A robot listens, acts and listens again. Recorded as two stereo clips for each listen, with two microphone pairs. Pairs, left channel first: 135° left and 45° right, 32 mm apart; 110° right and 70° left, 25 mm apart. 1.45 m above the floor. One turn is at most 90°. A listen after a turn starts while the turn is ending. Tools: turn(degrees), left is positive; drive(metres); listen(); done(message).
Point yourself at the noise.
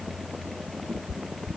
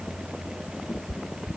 turn(degrees=-90)
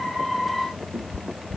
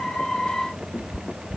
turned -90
turn(degrees=-40)
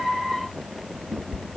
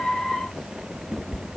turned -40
done("Found it: a cat meowing, straight ahead.")